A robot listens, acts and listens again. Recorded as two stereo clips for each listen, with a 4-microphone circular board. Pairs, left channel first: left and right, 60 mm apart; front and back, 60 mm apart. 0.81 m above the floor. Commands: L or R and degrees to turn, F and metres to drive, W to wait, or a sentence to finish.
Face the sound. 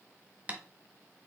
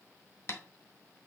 R30
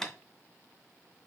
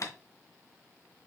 Found it: tapping, straight ahead.